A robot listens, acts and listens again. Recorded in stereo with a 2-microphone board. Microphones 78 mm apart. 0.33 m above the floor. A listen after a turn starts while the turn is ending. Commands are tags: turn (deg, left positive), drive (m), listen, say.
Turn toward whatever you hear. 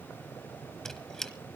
<turn deg="30"/>
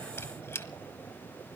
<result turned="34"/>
<turn deg="140"/>
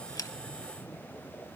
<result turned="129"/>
<turn deg="10"/>
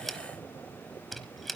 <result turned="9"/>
<say>Facing the squeak.</say>